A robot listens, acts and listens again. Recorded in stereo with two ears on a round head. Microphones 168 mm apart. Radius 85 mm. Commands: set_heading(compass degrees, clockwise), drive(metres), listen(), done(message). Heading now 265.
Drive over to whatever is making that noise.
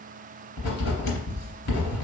set_heading(200)
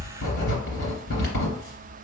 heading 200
set_heading(150)
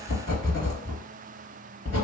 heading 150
set_heading(130)
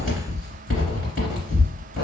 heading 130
drive(1.0)
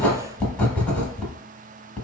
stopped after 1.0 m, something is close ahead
done("I am next to the writing.")